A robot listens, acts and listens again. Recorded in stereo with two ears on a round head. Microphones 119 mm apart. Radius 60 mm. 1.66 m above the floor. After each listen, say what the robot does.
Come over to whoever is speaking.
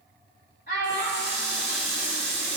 Turn 70° left.
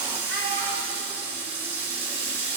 Keep listening.
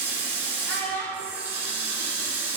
Turn 15° left.
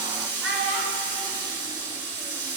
Drive 1.0 m forward.
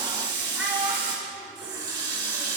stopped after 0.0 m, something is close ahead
Something is in my way. I am facing the child speaking but have not reached it.